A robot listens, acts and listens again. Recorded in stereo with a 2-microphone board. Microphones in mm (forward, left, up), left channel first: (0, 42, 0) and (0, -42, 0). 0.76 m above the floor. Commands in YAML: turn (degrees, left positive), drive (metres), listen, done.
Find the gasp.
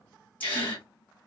turn: 25
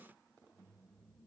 listen: true
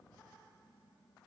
done: "I heard a gasp, but can't make it out now. It was about straight ahead or 130° left."